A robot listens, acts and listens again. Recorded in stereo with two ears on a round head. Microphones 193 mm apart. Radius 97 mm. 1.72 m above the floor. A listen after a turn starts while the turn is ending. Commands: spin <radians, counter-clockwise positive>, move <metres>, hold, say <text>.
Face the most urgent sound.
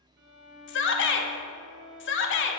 spin 1.05
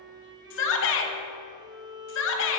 spin 1.05
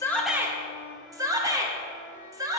spin -0.26
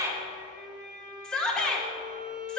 say Facing the shout.